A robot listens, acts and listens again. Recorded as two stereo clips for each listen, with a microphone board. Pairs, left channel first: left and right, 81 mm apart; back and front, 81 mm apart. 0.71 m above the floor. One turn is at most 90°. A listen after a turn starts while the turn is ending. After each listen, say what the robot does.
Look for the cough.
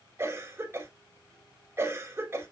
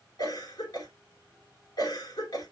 Turn 90° right.
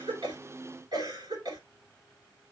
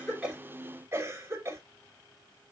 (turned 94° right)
Turn 60° right.
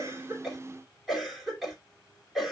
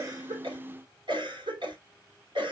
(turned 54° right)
Found it: a cough, straight ahead.